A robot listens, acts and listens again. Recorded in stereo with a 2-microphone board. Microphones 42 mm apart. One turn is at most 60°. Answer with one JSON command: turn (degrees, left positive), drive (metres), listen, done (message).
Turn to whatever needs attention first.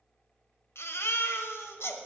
{"turn": 60}
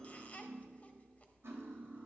{"turn": 30}
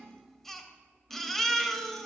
{"done": "Facing the baby crying, 1 to 2 m away."}